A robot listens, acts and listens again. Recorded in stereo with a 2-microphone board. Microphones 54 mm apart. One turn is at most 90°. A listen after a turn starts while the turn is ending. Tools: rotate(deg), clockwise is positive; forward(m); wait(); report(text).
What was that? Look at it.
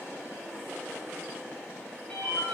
rotate(-25)
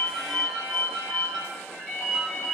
report("Facing the ringtone.")